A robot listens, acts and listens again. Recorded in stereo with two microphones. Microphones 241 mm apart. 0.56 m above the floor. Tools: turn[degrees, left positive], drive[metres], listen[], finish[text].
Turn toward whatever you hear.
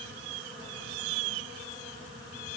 Action: listen[]
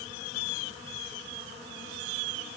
Action: listen[]
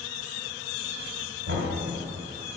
Thought: The knocking: about 60° right or 120° right.
Action: turn[-60]
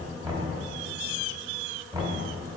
Thought: So it is at 15° right.
Action: turn[-15]
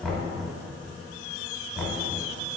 Action: finish[Found it: knocking, straight ahead.]